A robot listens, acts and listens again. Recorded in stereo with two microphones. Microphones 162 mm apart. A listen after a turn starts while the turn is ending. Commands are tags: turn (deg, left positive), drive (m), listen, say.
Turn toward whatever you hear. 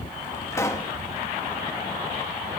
<turn deg="15"/>
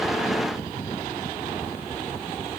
<listen/>
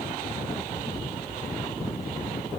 <say>I heard a pop, but can't make it out now. It was about straight ahead or 150° left.</say>